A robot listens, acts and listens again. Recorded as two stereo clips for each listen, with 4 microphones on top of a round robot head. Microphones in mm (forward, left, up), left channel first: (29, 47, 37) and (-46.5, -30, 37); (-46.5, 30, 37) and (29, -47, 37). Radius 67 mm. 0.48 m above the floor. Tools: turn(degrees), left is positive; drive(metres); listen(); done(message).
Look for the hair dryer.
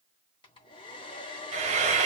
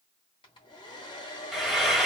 turn(degrees=85)
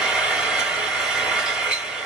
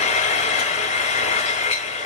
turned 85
listen()
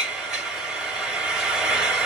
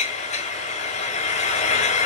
listen()
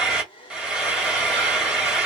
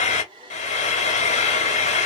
done("Found it: a hair dryer, straight ahead, 1 to 2 m away.")